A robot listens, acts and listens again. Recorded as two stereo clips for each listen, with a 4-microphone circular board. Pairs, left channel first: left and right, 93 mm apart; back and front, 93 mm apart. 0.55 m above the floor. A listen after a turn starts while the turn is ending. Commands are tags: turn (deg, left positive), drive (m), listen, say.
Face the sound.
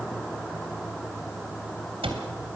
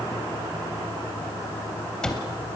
<turn deg="-95"/>
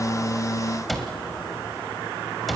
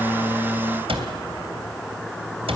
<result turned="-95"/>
<say>Facing the cupboard door.</say>